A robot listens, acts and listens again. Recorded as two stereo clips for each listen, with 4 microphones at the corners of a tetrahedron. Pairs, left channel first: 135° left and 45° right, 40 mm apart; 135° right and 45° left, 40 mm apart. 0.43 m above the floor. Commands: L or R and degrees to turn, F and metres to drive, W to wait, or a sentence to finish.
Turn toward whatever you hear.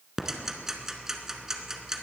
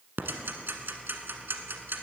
L30
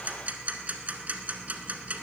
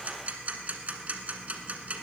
Facing the ticking, 1 to 2 m away.